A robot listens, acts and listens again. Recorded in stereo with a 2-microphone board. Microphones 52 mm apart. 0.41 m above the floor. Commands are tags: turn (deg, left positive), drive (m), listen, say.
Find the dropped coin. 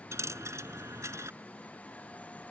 <turn deg="-75"/>
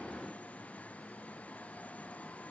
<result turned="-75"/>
<listen/>
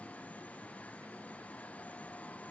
<say>I heard a dropped coin, but can't make it out now. It was about straight ahead or 30° right.</say>